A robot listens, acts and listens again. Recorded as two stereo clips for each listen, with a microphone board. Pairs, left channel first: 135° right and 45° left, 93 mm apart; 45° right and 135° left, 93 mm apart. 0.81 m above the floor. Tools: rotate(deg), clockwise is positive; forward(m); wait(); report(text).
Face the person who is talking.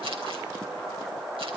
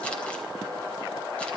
wait()
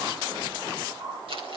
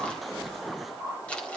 wait()
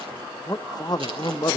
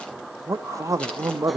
rotate(175)
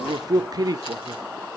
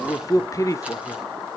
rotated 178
report("Facing the man speaking, under 1 m away.")